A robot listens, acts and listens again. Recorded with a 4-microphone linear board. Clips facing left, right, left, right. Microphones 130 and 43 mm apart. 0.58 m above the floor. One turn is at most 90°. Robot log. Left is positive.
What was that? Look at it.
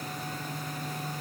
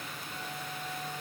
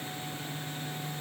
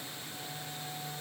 cmd idle
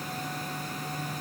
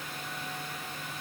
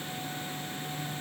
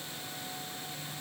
cmd idle
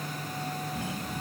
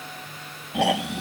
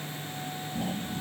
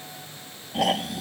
cmd yaw -90
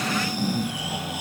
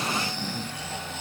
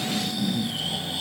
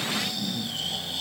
note: So it is at 10° left.
cmd yaw +10
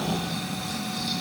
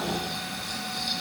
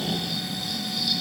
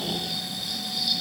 end: Facing the snoring.